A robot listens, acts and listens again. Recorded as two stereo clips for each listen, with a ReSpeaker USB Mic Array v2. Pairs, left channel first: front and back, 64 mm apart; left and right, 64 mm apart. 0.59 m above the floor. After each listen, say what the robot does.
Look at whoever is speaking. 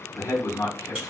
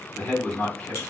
Turn 30° left.
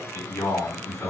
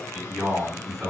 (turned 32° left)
Facing the man speaking, 1 to 2 m away.